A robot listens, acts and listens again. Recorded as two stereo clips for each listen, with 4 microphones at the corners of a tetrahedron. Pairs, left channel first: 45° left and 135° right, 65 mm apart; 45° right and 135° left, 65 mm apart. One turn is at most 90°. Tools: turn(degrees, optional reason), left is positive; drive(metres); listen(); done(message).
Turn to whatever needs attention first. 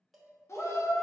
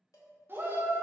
turn(degrees=85, reason="The shout: 85° left.")
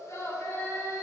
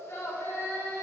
done("Found it: a shout, straight ahead, under 1 m away.")